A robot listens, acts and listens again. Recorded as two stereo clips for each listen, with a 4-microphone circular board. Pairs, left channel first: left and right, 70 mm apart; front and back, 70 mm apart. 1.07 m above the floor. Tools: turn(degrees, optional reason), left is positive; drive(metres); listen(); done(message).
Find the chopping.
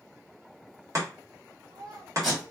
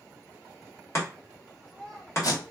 turn(degrees=-50, reason="The chopping: 50° right.")
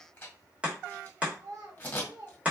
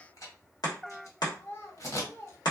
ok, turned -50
turn(degrees=-20, reason="The chopping is now 20° right.")
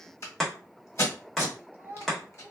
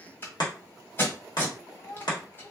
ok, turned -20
done("Facing the chopping, 1 to 2 m away.")